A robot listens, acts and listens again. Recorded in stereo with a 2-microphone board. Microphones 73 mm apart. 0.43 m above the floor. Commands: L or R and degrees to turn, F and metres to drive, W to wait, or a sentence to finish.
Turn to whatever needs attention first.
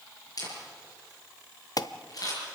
L60
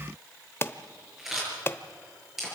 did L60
L40
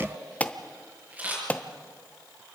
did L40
L25
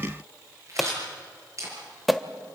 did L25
Found it: an alarm, straight ahead, under 1 m away.